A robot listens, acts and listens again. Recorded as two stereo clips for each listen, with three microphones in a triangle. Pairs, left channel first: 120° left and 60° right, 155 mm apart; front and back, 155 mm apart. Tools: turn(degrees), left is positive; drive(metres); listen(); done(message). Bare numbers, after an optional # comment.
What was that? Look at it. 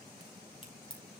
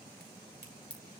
# The crack: 175° left.
turn(175)
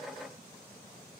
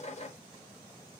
done("Facing where the crack came from. I can't hear it now.")